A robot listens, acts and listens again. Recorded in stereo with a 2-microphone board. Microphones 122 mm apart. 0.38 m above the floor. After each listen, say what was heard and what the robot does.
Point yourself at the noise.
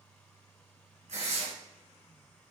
The tearing paper: about 70° right or 110° right. Turn 70° right.
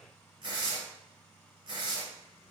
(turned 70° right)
So it is at 40° right. Turn 40° right.
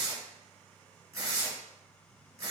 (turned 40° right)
The tearing paper is now 25° right. Turn 25° right.
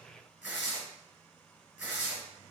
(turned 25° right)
The tearing paper is now 10° right. Turn 10° right.
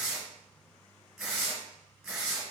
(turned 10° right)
Found it: tearing paper, straight ahead.